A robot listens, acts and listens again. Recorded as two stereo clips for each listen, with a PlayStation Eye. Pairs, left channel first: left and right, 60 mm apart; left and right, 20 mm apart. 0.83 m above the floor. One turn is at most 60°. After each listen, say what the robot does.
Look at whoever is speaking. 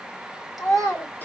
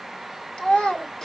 Turn 60° left.
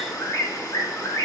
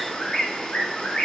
Turn 30° left.
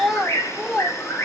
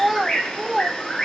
Facing the child speaking, 2 to 4 m away.